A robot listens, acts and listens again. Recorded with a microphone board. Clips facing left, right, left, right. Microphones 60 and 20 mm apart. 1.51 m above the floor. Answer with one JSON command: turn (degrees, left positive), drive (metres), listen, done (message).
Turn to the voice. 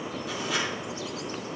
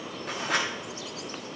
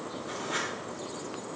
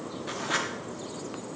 {"listen": true}
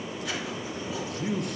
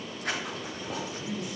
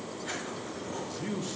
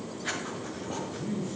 {"turn": 60}
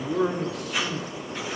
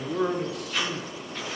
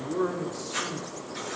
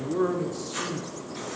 {"done": "Facing the man speaking, under 1 m away."}